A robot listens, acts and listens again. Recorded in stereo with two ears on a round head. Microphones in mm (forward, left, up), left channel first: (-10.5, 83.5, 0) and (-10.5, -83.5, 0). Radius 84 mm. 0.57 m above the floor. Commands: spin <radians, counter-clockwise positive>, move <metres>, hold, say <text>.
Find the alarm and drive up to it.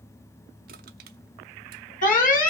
spin 0.79
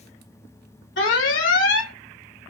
spin 1.48
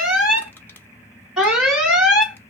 move 1.0
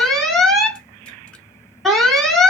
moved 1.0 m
move 1.0
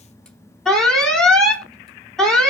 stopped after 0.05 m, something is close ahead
say I am next to the alarm.